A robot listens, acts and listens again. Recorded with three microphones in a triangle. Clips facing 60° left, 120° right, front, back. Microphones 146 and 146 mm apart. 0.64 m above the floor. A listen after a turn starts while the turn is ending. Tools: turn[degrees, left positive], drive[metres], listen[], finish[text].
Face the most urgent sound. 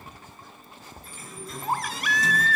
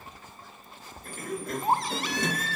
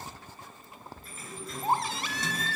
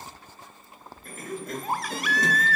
Thought: The baby crying: 60° right.
Action: turn[-60]
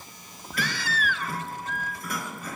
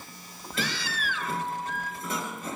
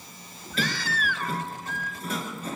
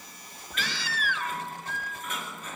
Thought: The baby crying is now 35° left.
Action: turn[35]
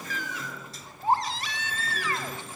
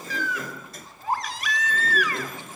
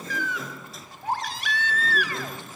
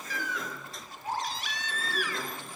Action: finish[Found it: a baby crying, straight ahead.]